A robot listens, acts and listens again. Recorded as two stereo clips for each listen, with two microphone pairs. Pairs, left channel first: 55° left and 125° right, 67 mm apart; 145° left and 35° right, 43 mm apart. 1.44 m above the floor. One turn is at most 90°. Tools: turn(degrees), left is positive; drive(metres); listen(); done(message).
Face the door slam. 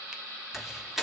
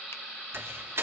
turn(degrees=-40)
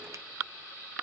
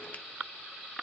done("I heard a door slam from this way, but can't make it out now.")